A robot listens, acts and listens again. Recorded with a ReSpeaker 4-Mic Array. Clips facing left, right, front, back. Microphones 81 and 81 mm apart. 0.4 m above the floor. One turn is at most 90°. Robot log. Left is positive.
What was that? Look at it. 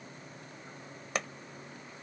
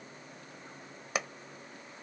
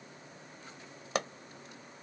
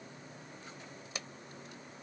end: Facing the pop.